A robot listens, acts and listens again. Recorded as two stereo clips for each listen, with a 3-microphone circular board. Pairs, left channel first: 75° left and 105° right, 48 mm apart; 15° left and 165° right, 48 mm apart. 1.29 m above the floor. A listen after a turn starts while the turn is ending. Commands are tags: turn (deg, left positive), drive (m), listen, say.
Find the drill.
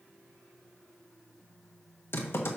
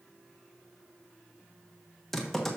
<listen/>
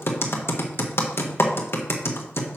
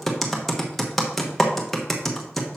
<listen/>
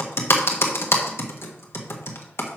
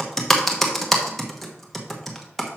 <say>I can't make out a drill, only typing on a keyboard.</say>